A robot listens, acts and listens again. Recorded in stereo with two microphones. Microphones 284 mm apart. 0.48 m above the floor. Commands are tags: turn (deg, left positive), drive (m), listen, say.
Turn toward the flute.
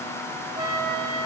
<turn deg="-15"/>
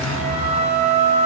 <turn deg="-150"/>
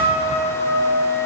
<turn deg="-10"/>
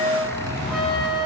<say>Facing the flute.</say>